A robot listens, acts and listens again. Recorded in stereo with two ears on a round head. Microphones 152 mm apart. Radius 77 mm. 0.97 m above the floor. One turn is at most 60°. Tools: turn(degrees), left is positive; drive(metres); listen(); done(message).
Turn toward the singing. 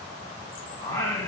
turn(degrees=15)
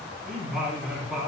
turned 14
turn(degrees=-30)
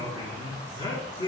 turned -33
turn(degrees=25)
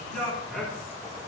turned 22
done("Found it: singing, straight ahead.")